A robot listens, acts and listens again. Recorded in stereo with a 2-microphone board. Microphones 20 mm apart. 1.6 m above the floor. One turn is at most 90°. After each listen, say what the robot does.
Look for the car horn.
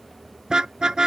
Turn 45° right.
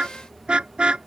Turn 90° right.
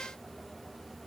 Keep listening.
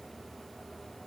Keep listening.
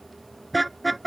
Facing the car horn.